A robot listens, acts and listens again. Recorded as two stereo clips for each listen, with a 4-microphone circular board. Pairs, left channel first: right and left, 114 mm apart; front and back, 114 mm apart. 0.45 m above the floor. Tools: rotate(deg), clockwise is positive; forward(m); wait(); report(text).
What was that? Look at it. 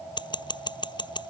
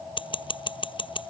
rotate(40)
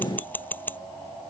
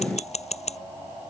rotate(15)
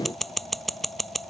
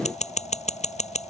report("Facing the scissors.")